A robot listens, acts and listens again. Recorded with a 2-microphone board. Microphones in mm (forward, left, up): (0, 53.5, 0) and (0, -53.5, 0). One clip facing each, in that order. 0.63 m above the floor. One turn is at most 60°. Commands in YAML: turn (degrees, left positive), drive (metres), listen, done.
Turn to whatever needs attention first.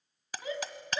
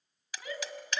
turn: 25
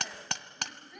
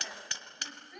done: "Facing the shout, over 4 m away."